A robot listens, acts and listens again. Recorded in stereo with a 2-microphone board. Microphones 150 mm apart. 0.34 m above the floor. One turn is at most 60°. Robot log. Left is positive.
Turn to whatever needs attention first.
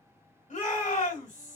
note: The shout: about 60° left or 120° left.
cmd yaw +60
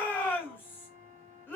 note: So it is at 15° left.
cmd yaw +15
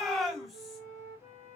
end: Facing the shout.